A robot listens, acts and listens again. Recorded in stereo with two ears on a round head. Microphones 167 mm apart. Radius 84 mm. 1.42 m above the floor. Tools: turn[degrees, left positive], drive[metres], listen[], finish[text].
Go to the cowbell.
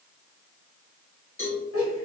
Thought: The cowbell: about 15° left or 165° left.
Action: turn[15]
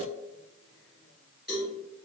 Action: drive[1.0]
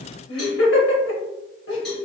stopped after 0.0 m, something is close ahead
Action: finish[Something is in my way. I am facing the cowbell but have not reached it.]